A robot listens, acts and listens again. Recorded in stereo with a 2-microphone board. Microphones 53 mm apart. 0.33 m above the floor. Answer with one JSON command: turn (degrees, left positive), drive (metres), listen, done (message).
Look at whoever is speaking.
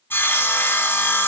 {"listen": true}
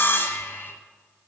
{"listen": true}
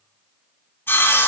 {"done": "I can't make out anyone speaking to turn to."}